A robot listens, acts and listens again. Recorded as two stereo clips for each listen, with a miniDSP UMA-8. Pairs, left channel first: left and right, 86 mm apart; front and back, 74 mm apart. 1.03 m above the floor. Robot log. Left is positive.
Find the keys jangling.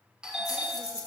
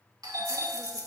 note: The keys jangling: 145° left.
cmd yaw +145
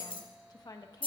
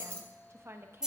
note: The keys jangling is now 100° left.
cmd yaw +100
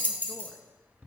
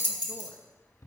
note: The keys jangling is now 20° left.
cmd yaw +20
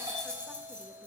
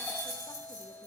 note: The keys jangling is now 15° left.
cmd yaw +15
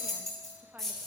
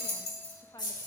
end: Facing the keys jangling.